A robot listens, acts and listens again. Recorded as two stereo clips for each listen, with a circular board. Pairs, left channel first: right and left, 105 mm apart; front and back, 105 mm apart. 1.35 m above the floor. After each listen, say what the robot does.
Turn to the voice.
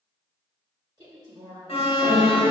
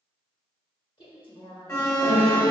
Turn 40° left.
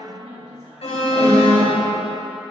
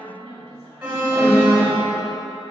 Found it: a woman speaking, straight ahead, 1 to 2 m away.